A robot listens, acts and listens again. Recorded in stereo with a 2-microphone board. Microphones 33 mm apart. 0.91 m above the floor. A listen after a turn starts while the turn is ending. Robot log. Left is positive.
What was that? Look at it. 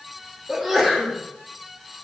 cmd yaw -30
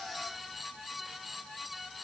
cmd idle
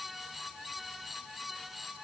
end: I heard a sneeze, but can't make it out now. It was about 25° left or 145° right.